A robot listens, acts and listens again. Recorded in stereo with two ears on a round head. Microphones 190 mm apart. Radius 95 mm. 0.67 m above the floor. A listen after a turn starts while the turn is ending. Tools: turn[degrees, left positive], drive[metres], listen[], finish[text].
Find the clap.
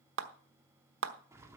Thought: The clap: about 65° right or 115° right.
Action: turn[-65]
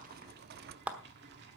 Action: finish[Found it: a clap, straight ahead.]